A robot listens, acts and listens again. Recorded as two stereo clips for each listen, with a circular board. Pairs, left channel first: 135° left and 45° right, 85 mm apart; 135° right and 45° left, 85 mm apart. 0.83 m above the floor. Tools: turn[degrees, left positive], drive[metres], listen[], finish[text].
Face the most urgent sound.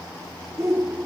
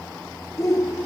Thought: The shout: 90° right.
Action: turn[-90]
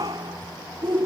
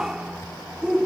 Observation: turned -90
Thought: The shout is now 35° right.
Action: turn[-35]
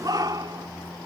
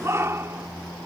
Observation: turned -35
Thought: The shout is now 10° right.
Action: turn[-10]
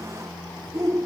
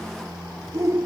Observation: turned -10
Action: finish[Facing the shout.]